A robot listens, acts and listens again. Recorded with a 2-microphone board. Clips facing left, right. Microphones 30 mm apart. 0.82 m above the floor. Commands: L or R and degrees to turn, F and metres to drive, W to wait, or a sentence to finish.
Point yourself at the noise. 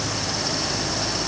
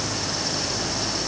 W
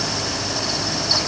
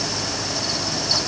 W
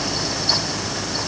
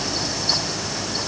I can't make out anything to turn to.